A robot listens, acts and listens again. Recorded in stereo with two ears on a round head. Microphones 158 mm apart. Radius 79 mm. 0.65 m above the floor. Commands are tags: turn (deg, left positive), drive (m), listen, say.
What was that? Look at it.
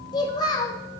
<turn deg="25"/>
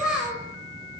<say>Facing the child speaking, 2 to 4 m away.</say>